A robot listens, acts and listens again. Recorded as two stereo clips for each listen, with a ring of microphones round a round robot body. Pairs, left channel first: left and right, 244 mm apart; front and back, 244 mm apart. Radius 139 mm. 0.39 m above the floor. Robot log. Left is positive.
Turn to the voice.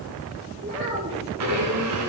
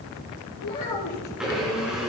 note: The child speaking: 35° right.
cmd yaw -35
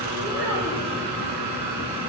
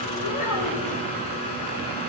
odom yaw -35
note: The child speaking is now 10° right.
cmd yaw -10
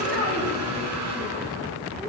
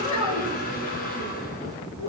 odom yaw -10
end: Facing the child speaking.